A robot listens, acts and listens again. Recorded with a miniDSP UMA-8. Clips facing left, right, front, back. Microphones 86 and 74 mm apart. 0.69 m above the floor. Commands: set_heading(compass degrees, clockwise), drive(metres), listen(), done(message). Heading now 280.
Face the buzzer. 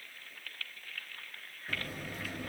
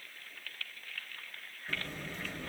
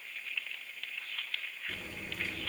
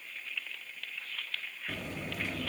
set_heading(110)
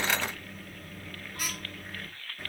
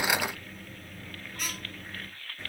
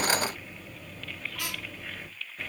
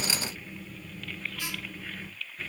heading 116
done("Found it: a buzzer, straight ahead, 1 to 2 m away.")